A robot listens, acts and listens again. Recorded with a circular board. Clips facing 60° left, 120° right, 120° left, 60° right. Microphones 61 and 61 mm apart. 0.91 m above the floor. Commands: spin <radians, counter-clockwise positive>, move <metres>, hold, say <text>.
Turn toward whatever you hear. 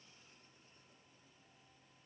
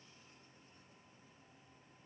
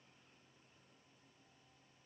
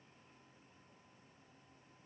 hold
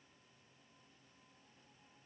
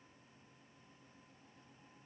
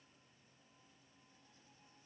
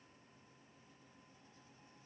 hold
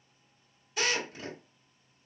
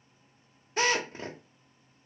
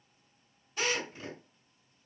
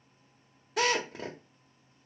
spin -1.22
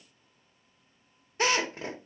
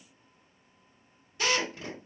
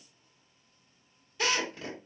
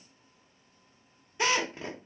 say Found it: a drill, straight ahead.